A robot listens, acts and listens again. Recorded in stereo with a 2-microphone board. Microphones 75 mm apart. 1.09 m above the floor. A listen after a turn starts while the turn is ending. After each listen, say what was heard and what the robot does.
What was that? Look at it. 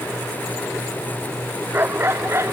The dog barking: about 35° right or 145° right. Turn 35° right.
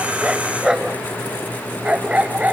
So it is at 20° right. Turn 20° right.
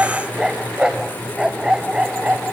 The dog barking is now 15° right. Turn 15° right.
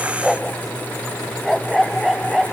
Found it: a dog barking, straight ahead.